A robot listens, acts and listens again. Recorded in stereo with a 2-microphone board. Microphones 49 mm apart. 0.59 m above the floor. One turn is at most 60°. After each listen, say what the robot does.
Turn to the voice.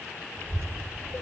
Turn 60° right.
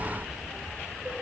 Turn 10° right.
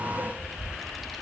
Found it: a child speaking, straight ahead, under 1 m away.